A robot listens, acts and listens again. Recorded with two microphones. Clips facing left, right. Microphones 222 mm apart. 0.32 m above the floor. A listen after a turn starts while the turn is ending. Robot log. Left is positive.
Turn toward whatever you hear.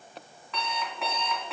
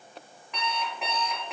cmd yaw -30
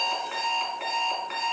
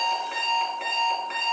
note: So it is at 135° right.
cmd yaw -135
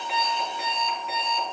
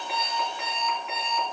note: The alarm clock is now 35° left.
cmd yaw +35
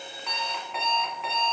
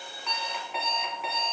end: Found it: an alarm clock, straight ahead, 1 to 2 m away.